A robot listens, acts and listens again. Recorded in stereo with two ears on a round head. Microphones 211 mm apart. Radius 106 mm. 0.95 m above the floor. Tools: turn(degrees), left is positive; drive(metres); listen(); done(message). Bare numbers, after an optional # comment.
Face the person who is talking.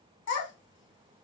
# The child speaking: about 60° left or 120° left.
turn(60)
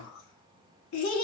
# So it is at 60° left.
turn(60)
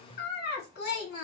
# The child speaking is now 45° left.
turn(45)
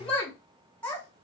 done("Found it: a child speaking, straight ahead, 1 to 2 m away.")